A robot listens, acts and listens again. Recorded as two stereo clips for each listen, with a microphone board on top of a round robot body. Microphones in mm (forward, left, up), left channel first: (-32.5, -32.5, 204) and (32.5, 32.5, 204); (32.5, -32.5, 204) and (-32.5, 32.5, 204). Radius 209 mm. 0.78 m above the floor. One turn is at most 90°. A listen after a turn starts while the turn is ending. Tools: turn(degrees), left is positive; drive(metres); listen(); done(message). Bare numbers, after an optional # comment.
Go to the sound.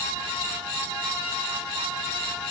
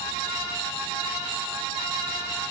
listen()
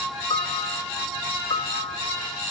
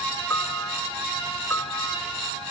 # The piano: 110° right.
turn(-90)
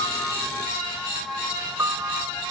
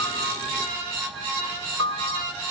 # The piano is now 15° right.
turn(-15)
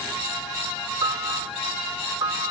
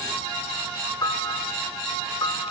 drive(1.0)
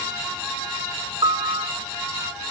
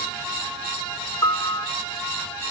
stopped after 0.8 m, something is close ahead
done("Something is in my way. I am facing the piano but have not reached it.")